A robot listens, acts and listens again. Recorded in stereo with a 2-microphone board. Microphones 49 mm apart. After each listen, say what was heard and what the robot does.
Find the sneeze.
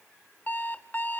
Keep listening.
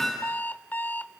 Keep listening.
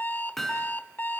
I can't make out a sneeze, only an alarm clock and hammering.